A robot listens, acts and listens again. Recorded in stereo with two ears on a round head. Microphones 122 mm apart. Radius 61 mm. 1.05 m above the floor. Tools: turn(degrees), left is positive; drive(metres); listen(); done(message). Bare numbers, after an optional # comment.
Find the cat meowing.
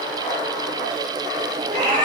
# The cat meowing: about 55° right or 125° right.
turn(-55)
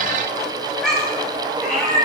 done("Facing the cat meowing.")